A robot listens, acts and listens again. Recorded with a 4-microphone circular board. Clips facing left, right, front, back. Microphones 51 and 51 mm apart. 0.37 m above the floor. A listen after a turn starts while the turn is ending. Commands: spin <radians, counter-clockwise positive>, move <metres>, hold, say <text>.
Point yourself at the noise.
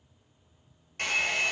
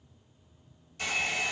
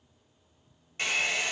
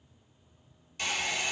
spin 0.96
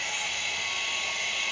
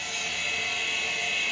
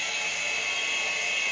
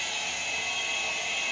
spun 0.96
say Facing the hair dryer.